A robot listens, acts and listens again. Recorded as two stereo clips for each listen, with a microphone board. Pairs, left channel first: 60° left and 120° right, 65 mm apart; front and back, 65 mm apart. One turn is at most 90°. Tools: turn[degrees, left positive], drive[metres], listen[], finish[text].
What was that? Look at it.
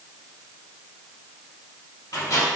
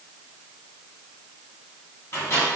Thought: The microwave: 45° left.
Action: turn[45]
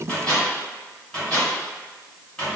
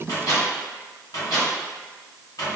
Thought: The microwave is now 10° right.
Action: turn[-10]
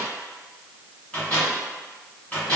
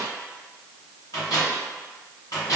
Action: finish[Facing the microwave, 1 to 2 m away.]